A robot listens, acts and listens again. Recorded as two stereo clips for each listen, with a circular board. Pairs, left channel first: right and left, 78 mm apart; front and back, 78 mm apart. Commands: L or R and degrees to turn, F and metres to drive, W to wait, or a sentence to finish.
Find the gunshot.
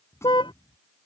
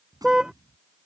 R145
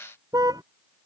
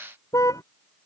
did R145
I heard a gunshot from this way, but can't make it out now.